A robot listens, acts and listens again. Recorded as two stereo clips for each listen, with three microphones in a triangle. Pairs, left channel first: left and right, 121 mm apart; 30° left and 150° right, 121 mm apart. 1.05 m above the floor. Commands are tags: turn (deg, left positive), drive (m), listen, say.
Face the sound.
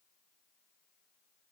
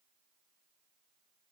<listen/>
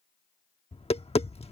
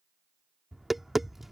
<turn deg="120"/>
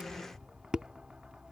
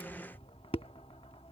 <turn deg="-10"/>
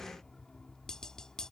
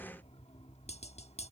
<say>Found it: tapping, straight ahead.</say>